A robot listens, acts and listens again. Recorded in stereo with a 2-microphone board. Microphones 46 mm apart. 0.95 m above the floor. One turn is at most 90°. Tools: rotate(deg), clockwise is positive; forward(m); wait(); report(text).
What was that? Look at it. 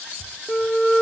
rotate(-30)
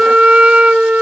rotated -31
rotate(25)
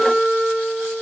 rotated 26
report("Facing the flute.")